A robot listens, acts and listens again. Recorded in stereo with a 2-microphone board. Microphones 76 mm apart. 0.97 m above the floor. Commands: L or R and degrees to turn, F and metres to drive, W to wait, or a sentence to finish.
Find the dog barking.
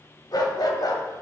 L60
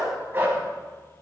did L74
R30
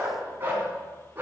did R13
R30
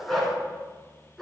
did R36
Facing the dog barking, over 4 m away.